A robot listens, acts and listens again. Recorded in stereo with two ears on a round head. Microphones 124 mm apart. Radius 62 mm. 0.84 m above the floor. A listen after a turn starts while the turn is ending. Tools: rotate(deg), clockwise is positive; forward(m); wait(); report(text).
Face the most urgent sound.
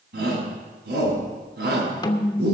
rotate(90)
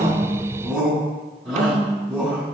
report("Facing the shout, over 4 m away.")